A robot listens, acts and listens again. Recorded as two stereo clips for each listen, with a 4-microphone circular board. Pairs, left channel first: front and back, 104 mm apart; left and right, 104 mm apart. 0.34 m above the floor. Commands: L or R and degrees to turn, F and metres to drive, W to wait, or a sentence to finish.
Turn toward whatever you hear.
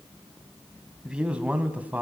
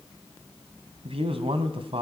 R110
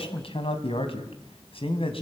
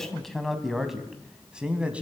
R15
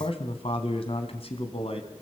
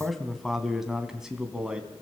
R10
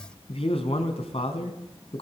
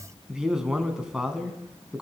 Facing the man speaking.